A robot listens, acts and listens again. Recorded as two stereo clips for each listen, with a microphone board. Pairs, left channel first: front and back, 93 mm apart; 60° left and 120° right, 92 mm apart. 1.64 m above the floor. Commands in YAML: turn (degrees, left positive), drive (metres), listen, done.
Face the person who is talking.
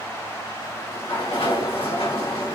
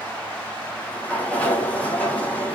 listen: true
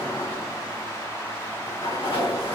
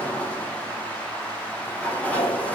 listen: true
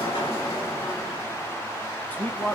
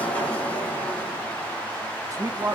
turn: -70
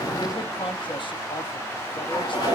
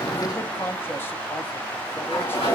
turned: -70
done: "Found it: a man speaking, straight ahead, 1 to 2 m away."